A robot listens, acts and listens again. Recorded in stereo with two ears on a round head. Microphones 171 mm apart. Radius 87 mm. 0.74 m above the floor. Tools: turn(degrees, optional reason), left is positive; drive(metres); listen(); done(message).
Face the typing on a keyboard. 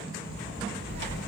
turn(degrees=-65, reason="The typing on a keyboard: about 65° right or 115° right.")
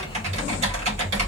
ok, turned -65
turn(degrees=-40, reason="So it is at 40° right.")
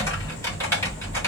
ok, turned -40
turn(degrees=15, reason="The typing on a keyboard is now 15° left.")
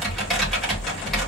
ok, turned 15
done("Facing the typing on a keyboard, 2 to 4 m away.")